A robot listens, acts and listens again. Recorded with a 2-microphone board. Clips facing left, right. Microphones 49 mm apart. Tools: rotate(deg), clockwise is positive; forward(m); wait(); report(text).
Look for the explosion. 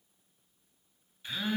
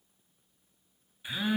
wait()
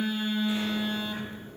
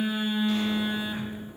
rotate(-30)
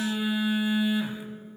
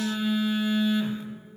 wait()
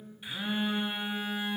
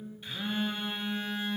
report("I heard an explosion, but can't make it out now. It was about 15° right or 135° left.")